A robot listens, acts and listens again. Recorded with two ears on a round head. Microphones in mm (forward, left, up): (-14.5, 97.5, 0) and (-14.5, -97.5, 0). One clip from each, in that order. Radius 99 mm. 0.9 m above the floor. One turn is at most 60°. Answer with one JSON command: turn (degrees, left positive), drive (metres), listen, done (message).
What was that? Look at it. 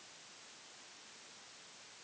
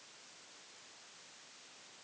{"listen": true}
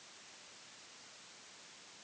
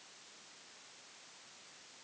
{"listen": true}
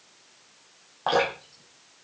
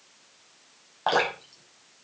{"turn": -20}
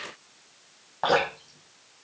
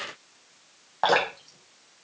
{"turn": -60}
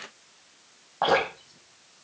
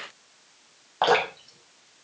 {"turn": -60}
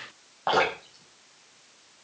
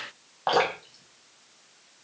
{"turn": -15}
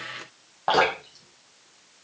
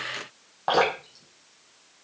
{"done": "Facing the dripping, over 4 m away."}